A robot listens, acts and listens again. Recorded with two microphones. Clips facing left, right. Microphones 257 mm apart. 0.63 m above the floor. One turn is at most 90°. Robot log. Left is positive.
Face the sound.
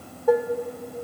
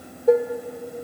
note: The dishes clattering: about 25° right or 155° right.
cmd yaw -25
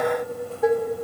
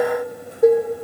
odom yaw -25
note: So it is at 125° right.
cmd yaw -90
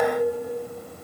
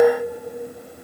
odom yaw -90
note: The dishes clattering is now 50° right.
cmd yaw -50
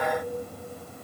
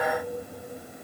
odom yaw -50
cmd idle
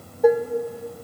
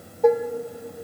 end: Facing the dishes clattering.